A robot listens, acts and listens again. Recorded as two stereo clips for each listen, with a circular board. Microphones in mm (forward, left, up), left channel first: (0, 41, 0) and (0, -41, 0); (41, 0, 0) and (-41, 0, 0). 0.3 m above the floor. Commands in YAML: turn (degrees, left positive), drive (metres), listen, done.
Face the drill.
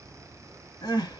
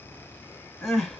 listen: true
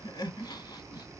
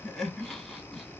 listen: true
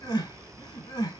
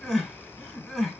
done: "I can't make out a drill, only crying."